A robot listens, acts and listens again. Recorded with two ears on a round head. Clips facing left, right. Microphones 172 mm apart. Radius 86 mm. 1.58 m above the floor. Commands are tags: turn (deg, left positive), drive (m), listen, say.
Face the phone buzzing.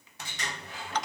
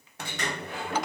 <listen/>
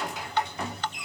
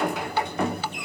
<listen/>
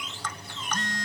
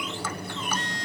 <turn deg="40"/>
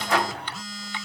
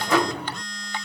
<say>Found it: a phone buzzing, straight ahead.</say>